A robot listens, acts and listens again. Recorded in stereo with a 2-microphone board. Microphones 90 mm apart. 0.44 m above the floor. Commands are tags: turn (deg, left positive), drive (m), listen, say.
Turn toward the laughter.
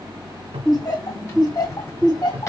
<turn deg="50"/>
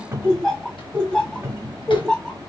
<turn deg="10"/>
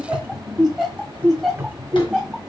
<say>Found it: laughter, straight ahead, 2 to 4 m away.</say>